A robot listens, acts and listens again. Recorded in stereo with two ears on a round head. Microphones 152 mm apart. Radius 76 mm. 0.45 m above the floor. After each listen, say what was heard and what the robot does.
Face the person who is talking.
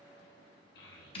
The child speaking: about 65° left or 115° left. Turn 65° left.
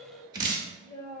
So it is at 25° left. Turn 25° left.
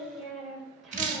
Facing the child speaking, 1 to 2 m away.